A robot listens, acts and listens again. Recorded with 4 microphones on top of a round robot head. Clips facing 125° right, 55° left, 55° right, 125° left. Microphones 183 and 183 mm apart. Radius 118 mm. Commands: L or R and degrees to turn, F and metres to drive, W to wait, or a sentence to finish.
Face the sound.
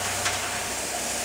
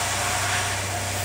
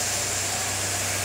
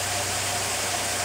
W
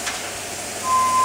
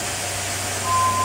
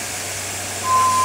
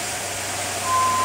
R100
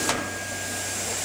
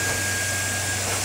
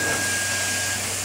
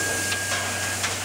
W
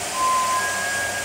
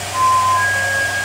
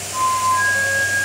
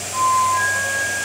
L10
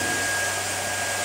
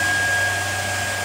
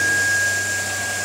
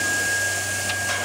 W
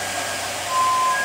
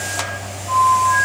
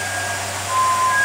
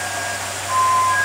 Found it: a flute, straight ahead.